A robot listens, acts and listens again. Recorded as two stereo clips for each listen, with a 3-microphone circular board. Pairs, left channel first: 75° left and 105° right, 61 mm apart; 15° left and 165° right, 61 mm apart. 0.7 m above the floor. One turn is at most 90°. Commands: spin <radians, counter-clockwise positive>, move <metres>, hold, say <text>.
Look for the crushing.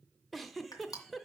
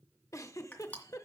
spin 1.31
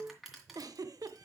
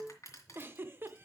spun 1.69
spin -0.35
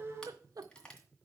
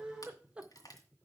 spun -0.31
say Facing the crushing, 2 to 4 m away.